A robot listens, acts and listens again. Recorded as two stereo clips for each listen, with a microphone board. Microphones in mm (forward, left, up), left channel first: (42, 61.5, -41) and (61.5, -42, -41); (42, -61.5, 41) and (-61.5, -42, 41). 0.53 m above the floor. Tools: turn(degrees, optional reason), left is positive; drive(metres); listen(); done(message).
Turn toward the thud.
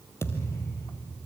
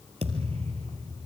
turn(degrees=165, reason="The thud: 165° left.")
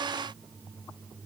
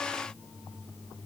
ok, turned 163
done("Facing where the thud came from. I can't hear it now.")